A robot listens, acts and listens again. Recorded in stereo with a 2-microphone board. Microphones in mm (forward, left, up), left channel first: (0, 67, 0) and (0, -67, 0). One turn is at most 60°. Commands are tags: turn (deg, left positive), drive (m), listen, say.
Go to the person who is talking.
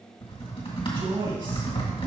<turn deg="-40"/>
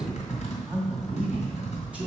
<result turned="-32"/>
<turn deg="-10"/>
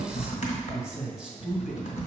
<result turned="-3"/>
<drive m="1.0"/>
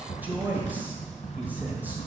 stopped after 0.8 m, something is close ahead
<turn deg="-20"/>
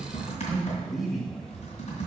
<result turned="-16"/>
<say>Arrived at the man speaking, straight ahead.</say>